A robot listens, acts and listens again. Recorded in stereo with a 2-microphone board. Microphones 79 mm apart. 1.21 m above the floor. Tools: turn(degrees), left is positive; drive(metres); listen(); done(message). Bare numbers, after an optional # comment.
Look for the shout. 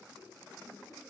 listen()
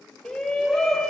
turn(30)
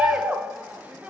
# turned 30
# So it is at 20° right.
turn(-20)
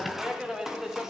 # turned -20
done("Found it: a shout, straight ahead, 1 to 2 m away.")